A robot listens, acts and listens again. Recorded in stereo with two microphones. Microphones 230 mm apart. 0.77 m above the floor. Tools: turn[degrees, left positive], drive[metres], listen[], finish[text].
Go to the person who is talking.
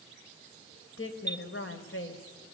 Thought: The woman speaking: about 60° left or 120° left.
Action: turn[60]
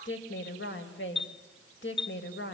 Thought: So it is at 55° left.
Action: turn[55]
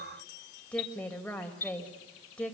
Action: drive[1.0]
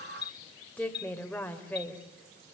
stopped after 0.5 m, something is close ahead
Action: finish[Something is in my way. I am facing the woman speaking but have not reached it.]